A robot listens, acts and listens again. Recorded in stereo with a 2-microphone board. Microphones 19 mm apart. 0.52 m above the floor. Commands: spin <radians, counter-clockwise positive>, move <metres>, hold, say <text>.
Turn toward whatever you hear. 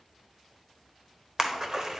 spin -0.61
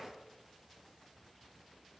hold
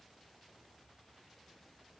say I heard a splash, but can't make it out now. It was about straight ahead or 110° right.